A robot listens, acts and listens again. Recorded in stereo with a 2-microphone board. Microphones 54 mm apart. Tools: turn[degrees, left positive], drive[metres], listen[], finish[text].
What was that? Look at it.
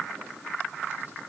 Action: listen[]
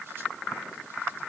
Action: listen[]
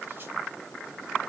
Action: finish[I can't make out anything to turn to.]